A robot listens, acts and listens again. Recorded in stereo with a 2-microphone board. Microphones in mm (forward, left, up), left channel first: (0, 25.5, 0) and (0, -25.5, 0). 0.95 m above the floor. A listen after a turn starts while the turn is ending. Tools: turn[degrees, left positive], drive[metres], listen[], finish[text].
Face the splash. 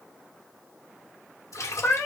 Thought: The splash: about 70° left or 110° left.
Action: turn[70]
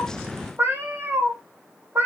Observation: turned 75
Action: listen[]
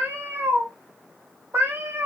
Action: finish[I heard a splash, but can't make it out now. It was about 5° right or 35° left.]